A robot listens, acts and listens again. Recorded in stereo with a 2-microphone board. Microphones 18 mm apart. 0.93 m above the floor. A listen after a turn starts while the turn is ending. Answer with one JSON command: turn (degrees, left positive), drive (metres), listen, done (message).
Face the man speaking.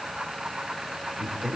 {"turn": -35}
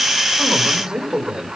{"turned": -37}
{"turn": -120}
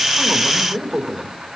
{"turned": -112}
{"turn": -20}
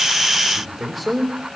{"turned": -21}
{"done": "Found it: a man speaking, straight ahead, 2 to 4 m away."}